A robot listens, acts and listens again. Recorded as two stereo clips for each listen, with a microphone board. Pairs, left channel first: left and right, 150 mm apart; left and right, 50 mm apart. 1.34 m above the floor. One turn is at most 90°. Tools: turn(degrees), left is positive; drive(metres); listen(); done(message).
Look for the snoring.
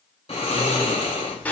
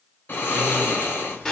turn(degrees=40)
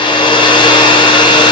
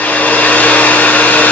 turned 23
listen()
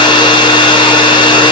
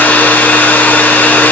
listen()
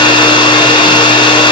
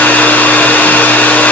done("I heard snoring, but can't make it out now. It was about 15° left or 115° left.")